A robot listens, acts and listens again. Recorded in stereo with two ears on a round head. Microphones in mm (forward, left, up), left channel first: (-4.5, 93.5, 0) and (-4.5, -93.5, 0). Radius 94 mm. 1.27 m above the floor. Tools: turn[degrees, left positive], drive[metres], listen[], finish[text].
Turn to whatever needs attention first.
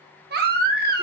Thought: The baby crying: about 50° right or 130° right.
Action: turn[-50]
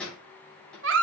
Thought: So it is at 75° right.
Action: turn[-75]
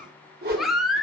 Action: finish[Found it: a baby crying, straight ahead, 1 to 2 m away.]